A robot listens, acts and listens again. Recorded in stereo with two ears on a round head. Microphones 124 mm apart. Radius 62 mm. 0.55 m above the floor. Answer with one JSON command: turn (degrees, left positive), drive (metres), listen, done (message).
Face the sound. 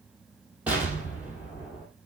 {"turn": -30}
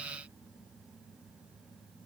{"listen": true}
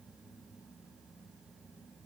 {"done": "I heard an explosion, but can't make it out now. It was about 20° left or 140° right."}